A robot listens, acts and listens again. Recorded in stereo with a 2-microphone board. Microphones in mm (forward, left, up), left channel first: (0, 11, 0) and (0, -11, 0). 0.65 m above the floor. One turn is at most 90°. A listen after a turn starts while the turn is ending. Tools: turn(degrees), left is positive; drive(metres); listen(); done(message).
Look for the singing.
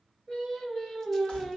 turn(degrees=55)
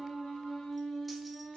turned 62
turn(degrees=60)
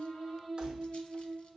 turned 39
turn(degrees=20)
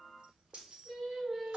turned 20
done("Facing the singing.")